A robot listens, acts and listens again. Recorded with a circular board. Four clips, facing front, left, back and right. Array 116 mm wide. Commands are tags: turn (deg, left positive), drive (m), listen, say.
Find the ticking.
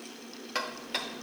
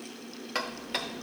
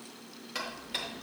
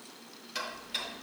<turn deg="60"/>
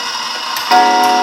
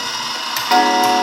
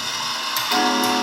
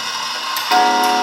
<say>Facing the ticking, under 1 m away.</say>